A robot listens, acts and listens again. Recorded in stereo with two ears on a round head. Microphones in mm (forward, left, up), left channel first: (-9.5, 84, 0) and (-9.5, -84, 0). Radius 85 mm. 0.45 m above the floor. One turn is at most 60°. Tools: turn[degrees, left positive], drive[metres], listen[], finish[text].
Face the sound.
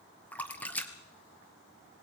Action: turn[30]
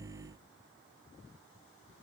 Action: listen[]
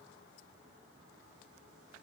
Action: finish[I heard a splash, but can't make it out now. It was about 20° right or 140° left.]